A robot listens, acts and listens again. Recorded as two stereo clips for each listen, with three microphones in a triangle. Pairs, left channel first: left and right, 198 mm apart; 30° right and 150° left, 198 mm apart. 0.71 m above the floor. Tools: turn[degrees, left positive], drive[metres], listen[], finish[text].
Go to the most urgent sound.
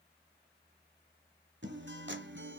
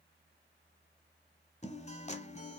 Action: listen[]
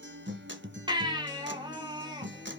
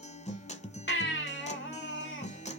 Thought: The baby crying: 25° right.
Action: turn[-25]
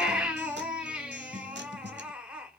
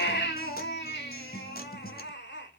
Action: drive[1.0]
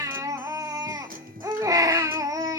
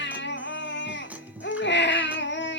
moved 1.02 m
Thought: The baby crying is now 20° right.
Action: turn[-20]
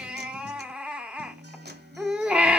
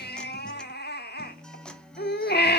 Action: drive[1.0]
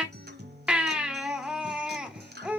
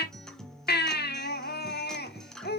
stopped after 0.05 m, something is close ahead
Action: finish[I am next to the baby crying.]